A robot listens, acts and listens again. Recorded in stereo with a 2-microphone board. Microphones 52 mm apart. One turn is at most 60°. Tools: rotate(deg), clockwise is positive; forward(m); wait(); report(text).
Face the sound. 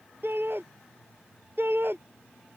rotate(45)
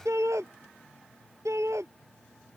rotate(60)
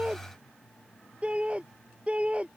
rotate(25)
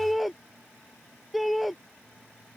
report("Facing the shout.")